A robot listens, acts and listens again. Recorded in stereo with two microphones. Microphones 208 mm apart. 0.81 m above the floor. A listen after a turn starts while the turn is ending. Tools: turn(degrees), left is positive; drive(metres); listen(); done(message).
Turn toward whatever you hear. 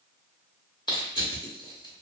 turn(degrees=20)
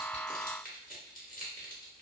turn(degrees=135)
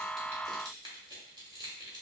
turn(degrees=-20)
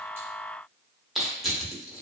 done("Facing the crushing, 1 to 2 m away.")